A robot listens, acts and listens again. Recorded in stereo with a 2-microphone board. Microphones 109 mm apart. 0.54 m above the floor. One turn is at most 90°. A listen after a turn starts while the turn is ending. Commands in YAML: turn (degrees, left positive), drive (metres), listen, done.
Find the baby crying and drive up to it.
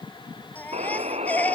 turn: 15
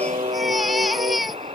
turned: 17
drive: 1.0
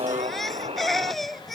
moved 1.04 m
drive: 1.0
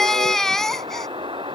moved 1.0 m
drive: 1.0
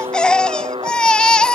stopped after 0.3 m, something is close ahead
turn: 10
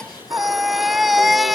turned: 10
done: "I am next to the baby crying."